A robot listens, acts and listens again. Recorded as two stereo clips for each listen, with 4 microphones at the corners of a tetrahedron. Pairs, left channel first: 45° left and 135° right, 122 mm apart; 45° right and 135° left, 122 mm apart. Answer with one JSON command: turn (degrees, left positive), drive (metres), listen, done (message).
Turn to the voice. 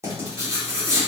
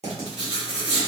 {"listen": true}
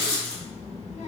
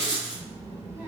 {"turn": 75}
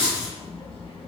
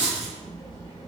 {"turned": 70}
{"done": "Facing the child speaking, 1 to 2 m away."}